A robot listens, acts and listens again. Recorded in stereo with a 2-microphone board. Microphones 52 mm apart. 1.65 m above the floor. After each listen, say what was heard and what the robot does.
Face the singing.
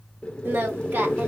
The singing: about 40° right or 140° right. Turn 40° right.
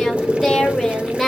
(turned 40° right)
Found it: singing, straight ahead.